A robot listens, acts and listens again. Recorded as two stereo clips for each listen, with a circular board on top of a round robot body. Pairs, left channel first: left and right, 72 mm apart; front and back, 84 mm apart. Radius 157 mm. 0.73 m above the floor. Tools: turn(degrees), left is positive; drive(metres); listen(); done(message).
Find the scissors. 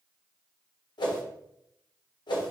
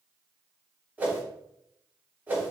listen()
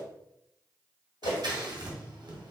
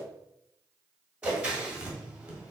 turn(degrees=-105)
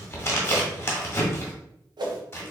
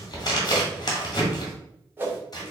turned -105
turn(degrees=35)
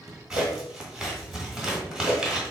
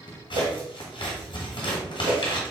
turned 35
done("Facing the scissors.")